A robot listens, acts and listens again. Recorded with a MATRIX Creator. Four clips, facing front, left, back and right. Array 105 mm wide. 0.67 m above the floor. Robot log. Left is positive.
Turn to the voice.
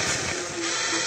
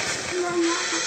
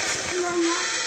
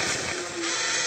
note: The child speaking: 140° left.
cmd yaw +140
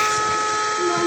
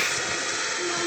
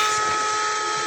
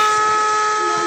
cmd idle
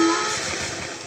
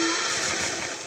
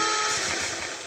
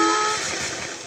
cmd idle
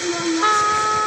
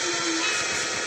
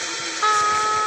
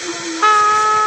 end: Facing where the child speaking came from. I can't hear it now.